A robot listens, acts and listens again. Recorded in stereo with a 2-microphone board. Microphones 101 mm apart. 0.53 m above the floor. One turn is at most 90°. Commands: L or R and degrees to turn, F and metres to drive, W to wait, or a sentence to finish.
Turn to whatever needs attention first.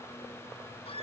W
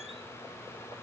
W
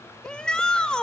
L30
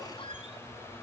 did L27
W
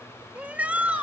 R15
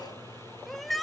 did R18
Found it: a shout, straight ahead, 2 to 4 m away.